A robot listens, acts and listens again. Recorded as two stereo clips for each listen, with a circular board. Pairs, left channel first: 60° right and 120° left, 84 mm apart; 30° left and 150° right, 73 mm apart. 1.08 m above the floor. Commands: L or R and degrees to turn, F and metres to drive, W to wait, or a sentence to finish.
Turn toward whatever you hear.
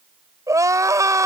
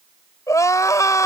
L70
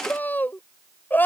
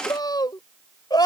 L10
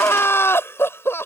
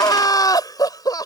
Found it: crying, straight ahead.